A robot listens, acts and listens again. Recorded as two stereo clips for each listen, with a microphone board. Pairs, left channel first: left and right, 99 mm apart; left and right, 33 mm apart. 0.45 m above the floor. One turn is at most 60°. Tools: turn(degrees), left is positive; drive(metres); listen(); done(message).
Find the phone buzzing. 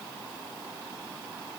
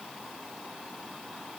listen()
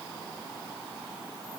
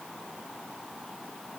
listen()
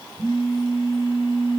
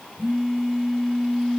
turn(degrees=60)
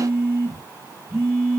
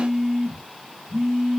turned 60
turn(degrees=15)
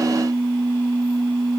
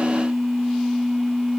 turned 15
done("Found it: a phone buzzing, straight ahead.")